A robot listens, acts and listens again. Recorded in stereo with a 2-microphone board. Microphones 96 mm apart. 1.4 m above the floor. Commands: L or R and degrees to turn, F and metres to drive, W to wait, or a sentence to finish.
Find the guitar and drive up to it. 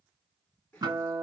R45
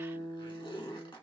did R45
R10
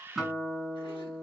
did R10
F1.0
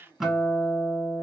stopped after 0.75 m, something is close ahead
Arrived at the guitar, straight ahead.